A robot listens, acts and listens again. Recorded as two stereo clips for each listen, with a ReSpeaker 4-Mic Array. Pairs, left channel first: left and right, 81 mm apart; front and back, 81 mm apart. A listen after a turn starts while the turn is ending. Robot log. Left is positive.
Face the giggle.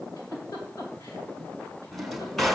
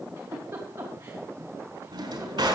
note: The giggle: 125° left.
cmd yaw +125
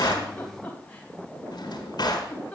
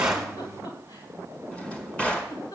note: The giggle is now 20° left.
cmd yaw +20
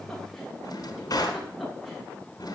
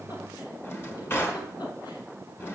cmd idle
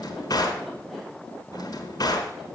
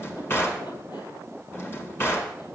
end: Facing the giggle.